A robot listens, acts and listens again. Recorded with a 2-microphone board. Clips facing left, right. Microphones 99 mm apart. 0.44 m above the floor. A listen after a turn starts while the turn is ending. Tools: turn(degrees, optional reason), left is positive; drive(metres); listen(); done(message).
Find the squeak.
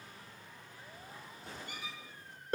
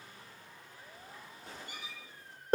turn(degrees=90)
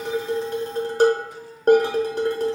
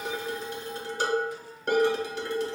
listen()
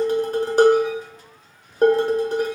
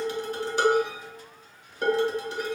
listen()
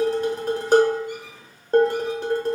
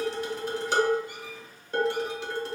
done("Facing where the squeak came from. I can't hear it now.")